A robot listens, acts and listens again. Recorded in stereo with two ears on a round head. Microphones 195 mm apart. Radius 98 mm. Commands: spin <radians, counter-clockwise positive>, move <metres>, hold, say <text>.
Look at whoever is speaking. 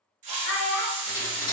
spin 0.96
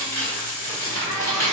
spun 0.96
hold
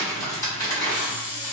hold
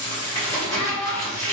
spin 1.22
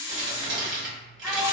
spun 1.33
hold
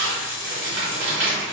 hold
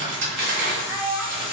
spin -0.17
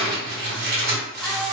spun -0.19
hold
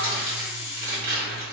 hold
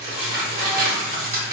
say I heard a child speaking from this way, but can't make it out now.